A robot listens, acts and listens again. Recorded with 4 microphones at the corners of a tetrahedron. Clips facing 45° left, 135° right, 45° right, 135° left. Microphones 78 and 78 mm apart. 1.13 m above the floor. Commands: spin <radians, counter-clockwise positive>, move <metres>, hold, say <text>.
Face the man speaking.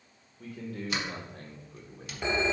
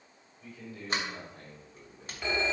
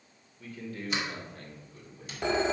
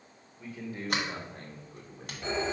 spin 1.48
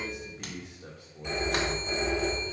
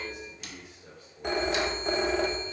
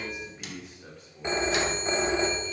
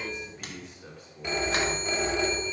spin 0.96
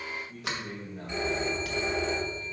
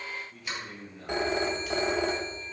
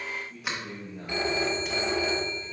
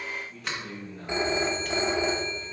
spin 0.52
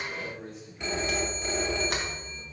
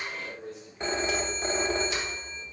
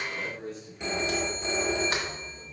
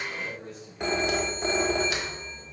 say Found it: a man speaking, straight ahead.